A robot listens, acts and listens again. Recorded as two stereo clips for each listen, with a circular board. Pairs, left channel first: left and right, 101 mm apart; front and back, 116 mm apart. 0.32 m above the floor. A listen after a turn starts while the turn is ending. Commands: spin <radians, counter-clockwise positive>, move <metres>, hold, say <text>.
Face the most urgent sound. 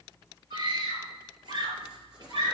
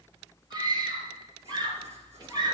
spin -2.27
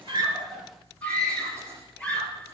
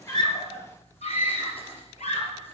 spin 0.17
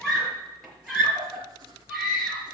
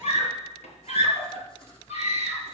say Facing the scream, over 4 m away.